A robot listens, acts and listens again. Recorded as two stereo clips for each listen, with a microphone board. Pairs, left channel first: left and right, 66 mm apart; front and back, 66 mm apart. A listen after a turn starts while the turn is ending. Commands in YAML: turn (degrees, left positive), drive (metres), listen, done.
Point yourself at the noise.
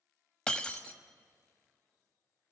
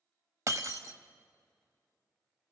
turn: 165
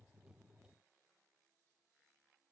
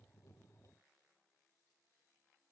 done: "Facing where the breaking glass came from. I can't hear it now."